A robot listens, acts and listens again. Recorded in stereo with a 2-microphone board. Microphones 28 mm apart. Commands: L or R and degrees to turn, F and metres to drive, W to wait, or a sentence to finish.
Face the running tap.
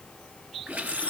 R65
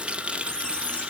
R45
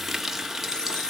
R10
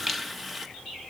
Facing the running tap.